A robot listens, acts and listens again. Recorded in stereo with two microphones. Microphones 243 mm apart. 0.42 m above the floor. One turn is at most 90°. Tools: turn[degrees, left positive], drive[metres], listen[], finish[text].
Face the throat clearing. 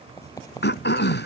Thought: The throat clearing: about 45° left or 135° left.
Action: turn[45]
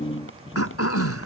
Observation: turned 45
Thought: So it is at 90° left.
Action: turn[90]
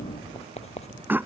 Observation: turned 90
Thought: The throat clearing is now 10° right.
Action: turn[-10]
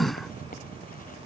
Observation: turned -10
Action: finish[Facing the throat clearing.]